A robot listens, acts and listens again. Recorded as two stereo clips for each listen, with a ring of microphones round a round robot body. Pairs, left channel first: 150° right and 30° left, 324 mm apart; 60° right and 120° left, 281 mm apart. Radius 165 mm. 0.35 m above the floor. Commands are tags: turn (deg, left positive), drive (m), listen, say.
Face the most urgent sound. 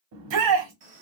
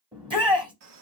<turn deg="50"/>
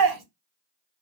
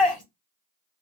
<turn deg="25"/>
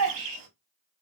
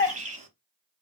<turn deg="10"/>
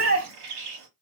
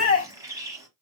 <say>Found it: a shout, straight ahead, 1 to 2 m away.</say>